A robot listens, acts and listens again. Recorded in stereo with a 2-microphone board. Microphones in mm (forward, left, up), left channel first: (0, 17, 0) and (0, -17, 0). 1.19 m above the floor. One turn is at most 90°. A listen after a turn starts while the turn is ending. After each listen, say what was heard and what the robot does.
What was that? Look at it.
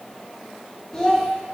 The child speaking: about 20° left or 160° left. Turn 20° left.
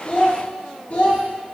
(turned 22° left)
So it is at 135° left. Turn 90° left.
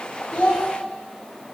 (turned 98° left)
The child speaking is now 35° left. Turn 35° left.
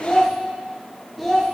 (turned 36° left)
Found it: a child speaking, straight ahead.